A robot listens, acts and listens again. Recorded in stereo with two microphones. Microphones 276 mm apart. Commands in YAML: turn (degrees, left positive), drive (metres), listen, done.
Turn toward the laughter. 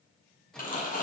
listen: true
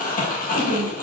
turn: 60
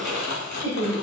turn: 60
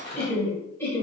turn: 10
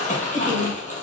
done: "Facing the laughter, over 4 m away."